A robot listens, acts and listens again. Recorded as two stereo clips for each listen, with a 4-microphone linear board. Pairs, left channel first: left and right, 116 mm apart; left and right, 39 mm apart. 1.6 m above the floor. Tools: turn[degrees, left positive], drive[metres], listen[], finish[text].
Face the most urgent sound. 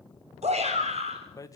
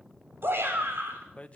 Thought: The shout: about 70° right or 110° right.
Action: turn[-70]
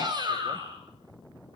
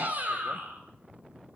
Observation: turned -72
Thought: So it is at 40° right.
Action: turn[-40]
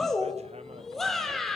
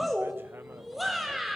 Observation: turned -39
Action: finish[Found it: a shout, straight ahead, over 4 m away.]